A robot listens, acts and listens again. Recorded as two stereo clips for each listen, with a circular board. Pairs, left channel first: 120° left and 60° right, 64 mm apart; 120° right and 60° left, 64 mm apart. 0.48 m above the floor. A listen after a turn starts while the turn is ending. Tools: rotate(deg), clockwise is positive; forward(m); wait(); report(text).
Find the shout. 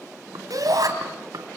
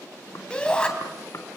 rotate(45)
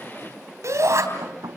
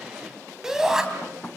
rotate(20)
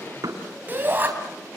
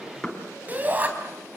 report("Facing the shout, 2 to 4 m away.")